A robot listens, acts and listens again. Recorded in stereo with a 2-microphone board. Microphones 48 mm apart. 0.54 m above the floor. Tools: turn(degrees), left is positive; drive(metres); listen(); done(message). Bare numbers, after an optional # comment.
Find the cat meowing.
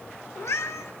turn(90)
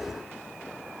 listen()
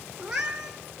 # The cat meowing is now 10° right.
turn(-10)
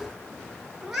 done("Facing the cat meowing.")